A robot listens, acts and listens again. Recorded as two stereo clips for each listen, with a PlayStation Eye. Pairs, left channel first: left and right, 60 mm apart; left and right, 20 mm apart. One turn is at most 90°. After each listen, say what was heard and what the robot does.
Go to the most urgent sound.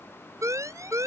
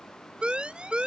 The siren: about 60° right or 120° right. Turn 60° right.
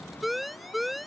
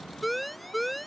Drive 1.0 m forward.
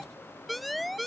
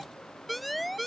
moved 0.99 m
Drive 1.0 m forward.
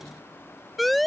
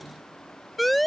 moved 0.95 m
Drive 1.0 m forward.
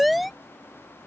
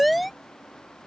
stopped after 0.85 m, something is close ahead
I am next to the siren.